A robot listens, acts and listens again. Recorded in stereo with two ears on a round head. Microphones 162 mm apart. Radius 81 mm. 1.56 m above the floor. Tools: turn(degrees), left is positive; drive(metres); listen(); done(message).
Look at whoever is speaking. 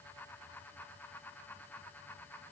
listen()
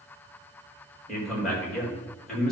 turn(degrees=30)
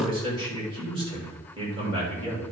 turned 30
turn(degrees=-30)
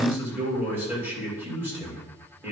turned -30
turn(degrees=-10)
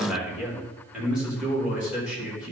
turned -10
done("Found it: a man speaking, straight ahead.")